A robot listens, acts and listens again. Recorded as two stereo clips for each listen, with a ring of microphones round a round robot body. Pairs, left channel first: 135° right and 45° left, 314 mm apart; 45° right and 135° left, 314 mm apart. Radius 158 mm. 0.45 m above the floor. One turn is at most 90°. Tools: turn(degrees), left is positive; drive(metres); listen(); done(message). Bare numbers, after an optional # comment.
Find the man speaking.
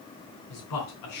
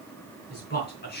# The man speaking: 105° right.
turn(-90)
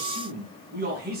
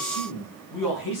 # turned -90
# The man speaking is now 15° right.
turn(-15)
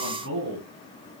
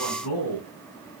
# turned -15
done("Found it: a man speaking, straight ahead.")